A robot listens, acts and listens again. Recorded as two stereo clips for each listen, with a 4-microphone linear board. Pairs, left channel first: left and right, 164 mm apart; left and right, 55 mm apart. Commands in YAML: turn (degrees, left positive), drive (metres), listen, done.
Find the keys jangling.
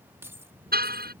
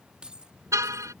turn: -15
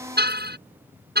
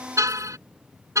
listen: true
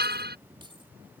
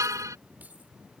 turn: -30
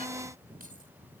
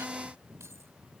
listen: true
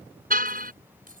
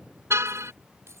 turn: -120
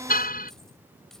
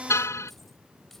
listen: true
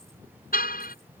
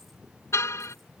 listen: true
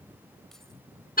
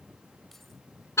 done: "I heard keys jangling from this way, but can't make it out now."